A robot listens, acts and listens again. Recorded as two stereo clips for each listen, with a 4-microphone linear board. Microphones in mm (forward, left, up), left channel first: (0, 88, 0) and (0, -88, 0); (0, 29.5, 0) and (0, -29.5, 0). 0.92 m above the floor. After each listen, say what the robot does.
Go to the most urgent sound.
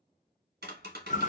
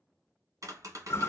Keep listening.
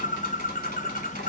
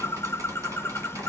Keep listening.
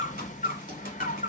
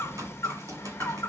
I can't make out anything urgent to turn to.